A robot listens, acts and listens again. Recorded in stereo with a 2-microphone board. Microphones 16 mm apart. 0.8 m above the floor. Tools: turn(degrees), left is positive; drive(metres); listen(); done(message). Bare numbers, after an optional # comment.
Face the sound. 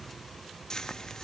# The frying: about 50° left or 130° left.
turn(50)
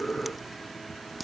listen()
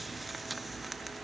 listen()
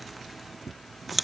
done("Found it: frying, straight ahead.")